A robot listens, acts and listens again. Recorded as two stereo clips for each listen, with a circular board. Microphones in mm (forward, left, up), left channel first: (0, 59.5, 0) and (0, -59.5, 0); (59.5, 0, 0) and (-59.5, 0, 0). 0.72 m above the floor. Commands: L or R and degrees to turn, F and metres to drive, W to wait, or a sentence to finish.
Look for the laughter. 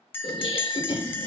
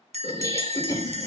L55
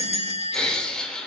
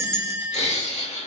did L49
L10
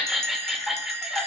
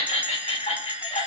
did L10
Found it: laughter, straight ahead, 2 to 4 m away.